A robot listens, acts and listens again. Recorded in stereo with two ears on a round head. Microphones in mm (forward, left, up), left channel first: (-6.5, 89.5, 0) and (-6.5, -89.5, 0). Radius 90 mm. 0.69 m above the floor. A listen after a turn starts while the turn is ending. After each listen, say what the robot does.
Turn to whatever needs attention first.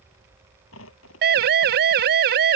Turn 55° right.
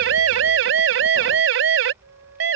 Turn 65° right.
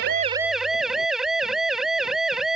Found it: a siren, straight ahead.